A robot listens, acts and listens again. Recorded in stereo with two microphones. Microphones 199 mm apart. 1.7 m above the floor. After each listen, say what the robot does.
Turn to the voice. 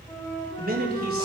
Turn 50° right.
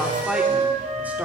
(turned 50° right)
Turn 10° right.
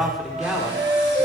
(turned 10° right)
Facing the man speaking.